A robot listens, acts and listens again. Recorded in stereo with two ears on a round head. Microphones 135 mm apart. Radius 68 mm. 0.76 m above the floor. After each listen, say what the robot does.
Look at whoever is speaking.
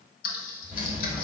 Keep listening.
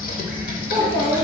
Turn 55° right.
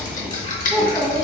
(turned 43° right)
Turn 15° right.
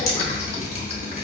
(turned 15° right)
Keep listening.
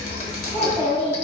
Facing the child speaking.